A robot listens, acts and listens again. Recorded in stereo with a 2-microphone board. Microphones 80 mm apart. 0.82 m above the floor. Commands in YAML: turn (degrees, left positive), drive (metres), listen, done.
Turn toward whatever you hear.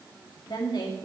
turn: 65
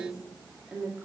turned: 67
turn: -15
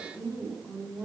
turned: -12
turn: -20
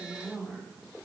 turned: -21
done: "Facing the woman speaking, 2 to 4 m away."